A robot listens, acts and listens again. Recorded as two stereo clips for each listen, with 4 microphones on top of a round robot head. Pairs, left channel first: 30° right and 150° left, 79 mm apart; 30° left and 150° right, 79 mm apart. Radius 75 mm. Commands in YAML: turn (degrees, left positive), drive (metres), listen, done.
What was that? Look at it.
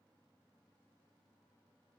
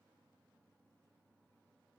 listen: true
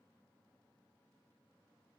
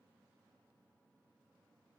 listen: true
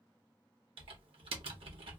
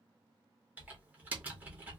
turn: 140
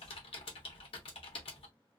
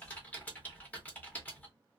turn: -40
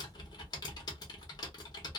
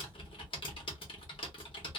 turn: 10
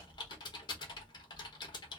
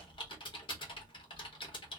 done: "Facing the typing on a keyboard."